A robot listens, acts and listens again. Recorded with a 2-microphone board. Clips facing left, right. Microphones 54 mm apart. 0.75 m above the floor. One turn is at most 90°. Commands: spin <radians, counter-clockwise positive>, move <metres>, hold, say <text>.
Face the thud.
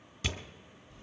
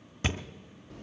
spin -0.70
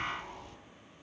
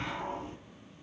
hold
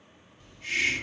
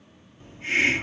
say I heard a thud, but can't make it out now. It was about straight ahead or 100° right.